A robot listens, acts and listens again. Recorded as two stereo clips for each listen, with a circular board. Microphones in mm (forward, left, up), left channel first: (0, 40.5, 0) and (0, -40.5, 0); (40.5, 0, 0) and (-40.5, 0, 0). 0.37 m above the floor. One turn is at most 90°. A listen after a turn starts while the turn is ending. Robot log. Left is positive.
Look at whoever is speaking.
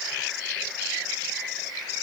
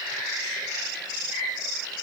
cmd idle
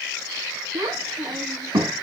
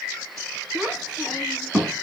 note: The child speaking: 100° right.
cmd yaw -90
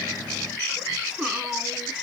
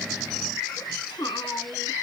note: The child speaking is now 10° right.
cmd yaw -10
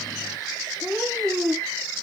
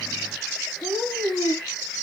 end: Facing the child speaking, 1 to 2 m away.